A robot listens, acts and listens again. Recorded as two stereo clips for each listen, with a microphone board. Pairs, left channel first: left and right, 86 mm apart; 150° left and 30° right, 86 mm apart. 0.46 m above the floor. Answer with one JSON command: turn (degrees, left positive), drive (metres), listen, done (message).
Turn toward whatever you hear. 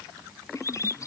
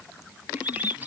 {"turn": 40}
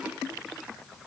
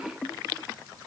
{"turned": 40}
{"listen": true}
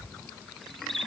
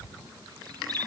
{"done": "Facing the bird."}